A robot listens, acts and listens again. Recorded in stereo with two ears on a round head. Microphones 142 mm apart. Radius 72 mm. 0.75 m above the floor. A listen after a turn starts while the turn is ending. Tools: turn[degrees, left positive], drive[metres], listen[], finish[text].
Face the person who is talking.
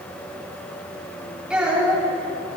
Action: turn[-30]
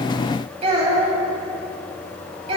Thought: So it is at 140° right.
Action: turn[-140]
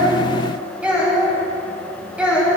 Thought: The child speaking is now 10° right.
Action: turn[-10]
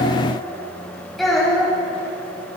Action: finish[Found it: a child speaking, straight ahead, 2 to 4 m away.]